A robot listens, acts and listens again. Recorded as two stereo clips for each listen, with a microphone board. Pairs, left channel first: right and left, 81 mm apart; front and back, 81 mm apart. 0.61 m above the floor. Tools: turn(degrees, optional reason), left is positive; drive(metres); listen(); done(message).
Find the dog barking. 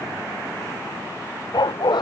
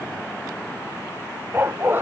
turn(degrees=-115, reason="The dog barking: 115° right.")
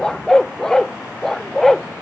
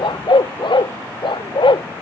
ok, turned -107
done("Found it: a dog barking, straight ahead.")